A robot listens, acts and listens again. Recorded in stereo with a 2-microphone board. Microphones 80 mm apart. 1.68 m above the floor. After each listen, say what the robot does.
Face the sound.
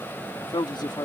Turn 70° left.
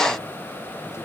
Keep listening.
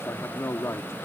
Turn 35° left.
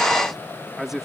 Found it: a man speaking, straight ahead.